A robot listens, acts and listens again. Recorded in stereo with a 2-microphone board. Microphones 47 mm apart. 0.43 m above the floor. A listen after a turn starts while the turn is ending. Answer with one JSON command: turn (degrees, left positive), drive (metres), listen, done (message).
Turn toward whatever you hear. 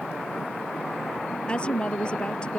{"turn": 25}
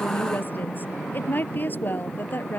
{"turn": 135}
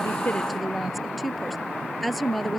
{"done": "Found it: a woman speaking, straight ahead."}